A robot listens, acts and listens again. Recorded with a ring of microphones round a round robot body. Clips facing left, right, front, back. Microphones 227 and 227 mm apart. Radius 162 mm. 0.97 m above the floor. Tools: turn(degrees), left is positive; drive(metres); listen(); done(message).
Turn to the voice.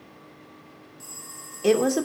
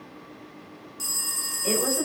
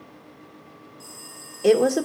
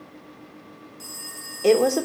turn(degrees=80)
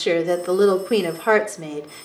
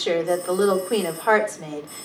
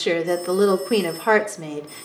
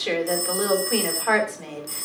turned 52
turn(degrees=30)
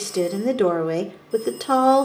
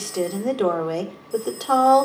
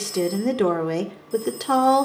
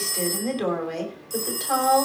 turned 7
turn(degrees=25)
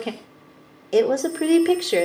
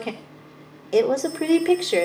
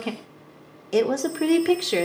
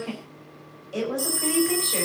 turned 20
done("Facing the woman speaking.")